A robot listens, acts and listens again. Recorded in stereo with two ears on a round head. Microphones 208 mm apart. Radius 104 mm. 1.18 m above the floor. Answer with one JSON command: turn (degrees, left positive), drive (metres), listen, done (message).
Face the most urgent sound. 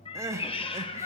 {"turn": -30}
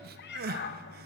{"turn": -135}
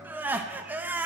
{"turn": -10}
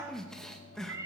{"done": "Facing the crying, under 1 m away."}